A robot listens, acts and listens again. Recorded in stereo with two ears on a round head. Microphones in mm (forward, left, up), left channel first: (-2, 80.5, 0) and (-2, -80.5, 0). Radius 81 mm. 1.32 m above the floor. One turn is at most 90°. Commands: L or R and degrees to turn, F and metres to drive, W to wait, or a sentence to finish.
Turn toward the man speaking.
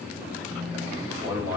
R30
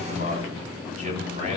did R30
R90
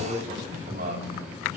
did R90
R45
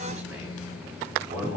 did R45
R10
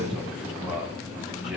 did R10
Facing the man speaking.